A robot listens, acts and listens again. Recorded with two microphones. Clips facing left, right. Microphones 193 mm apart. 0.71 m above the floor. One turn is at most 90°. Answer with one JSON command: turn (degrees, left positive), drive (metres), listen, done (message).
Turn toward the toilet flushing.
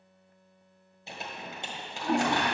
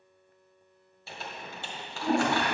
{"turn": -25}
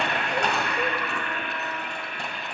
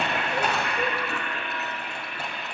{"done": "Facing the toilet flushing."}